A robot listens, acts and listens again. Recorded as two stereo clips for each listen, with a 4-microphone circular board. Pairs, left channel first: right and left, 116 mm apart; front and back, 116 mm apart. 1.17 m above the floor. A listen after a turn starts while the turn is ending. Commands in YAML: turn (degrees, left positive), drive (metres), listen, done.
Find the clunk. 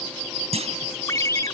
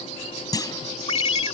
turn: 60
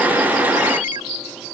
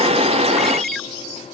done: "I heard a clunk from this way, but can't make it out now."